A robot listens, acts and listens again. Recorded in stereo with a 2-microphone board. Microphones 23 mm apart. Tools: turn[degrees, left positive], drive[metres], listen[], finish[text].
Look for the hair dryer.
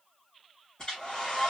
Thought: The hair dryer: about 35° left or 145° left.
Action: turn[35]
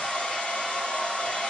Thought: So it is at 110° left.
Action: turn[110]
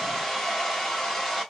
Thought: The hair dryer is now 20° left.
Action: turn[20]
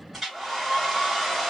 Action: finish[Found it: a hair dryer, straight ahead.]